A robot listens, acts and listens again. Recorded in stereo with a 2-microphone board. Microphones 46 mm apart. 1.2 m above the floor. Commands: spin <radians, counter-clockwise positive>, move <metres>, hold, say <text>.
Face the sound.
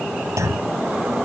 spin -1.57
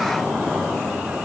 say Facing where the clunk came from. I can't hear it now.